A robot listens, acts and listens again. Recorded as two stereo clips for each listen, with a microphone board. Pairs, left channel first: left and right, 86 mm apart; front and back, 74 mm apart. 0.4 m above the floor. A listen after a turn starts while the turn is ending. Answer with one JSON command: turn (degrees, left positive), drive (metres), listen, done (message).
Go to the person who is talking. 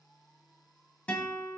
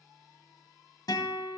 {"listen": true}
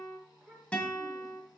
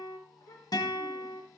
{"turn": -15}
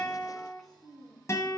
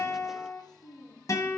{"drive": 1.0}
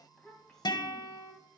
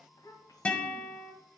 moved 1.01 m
{"drive": 1.0}
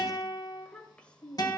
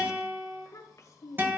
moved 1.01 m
{"turn": 15}
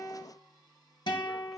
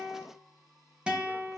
{"listen": true}
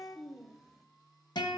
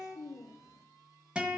{"drive": 1.0}
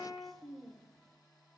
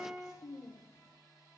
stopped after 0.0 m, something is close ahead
{"done": "Arrived at the child speaking, straight ahead."}